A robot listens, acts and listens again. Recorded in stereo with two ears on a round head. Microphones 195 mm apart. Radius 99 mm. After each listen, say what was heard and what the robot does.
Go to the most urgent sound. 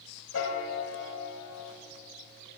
Keep listening.
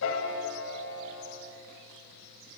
Keep listening.
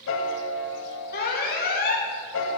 The alarm: about 45° left or 135° left. Turn 45° left.
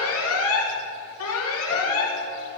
So it is at 85° left. Turn 85° left.
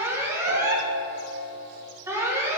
The alarm is now 10° right. Turn 10° right.
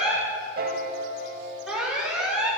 Drive 1.0 m forward.
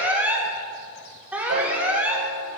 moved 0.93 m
Drive 1.0 m forward.
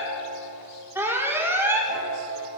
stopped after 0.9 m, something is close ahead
The alarm is now 15° right. Turn 15° right.
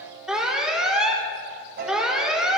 Arrived at the alarm, straight ahead.